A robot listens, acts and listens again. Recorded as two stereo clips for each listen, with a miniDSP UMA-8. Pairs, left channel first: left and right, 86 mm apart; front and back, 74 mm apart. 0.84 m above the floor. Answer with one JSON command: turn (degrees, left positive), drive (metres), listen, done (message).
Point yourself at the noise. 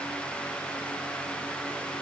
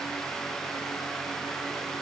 {"listen": true}
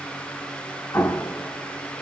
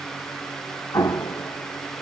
{"turn": 30}
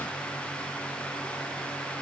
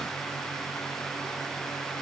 {"done": "Facing where the explosion came from. I can't hear it now."}